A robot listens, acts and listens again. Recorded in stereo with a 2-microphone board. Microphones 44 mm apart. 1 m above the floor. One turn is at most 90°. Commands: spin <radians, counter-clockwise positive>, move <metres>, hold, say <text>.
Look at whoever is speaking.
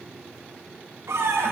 hold
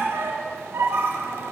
hold
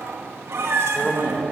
spin 0.61
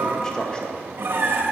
spin 0.44
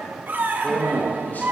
spin 0.70
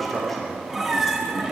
say Facing the man speaking.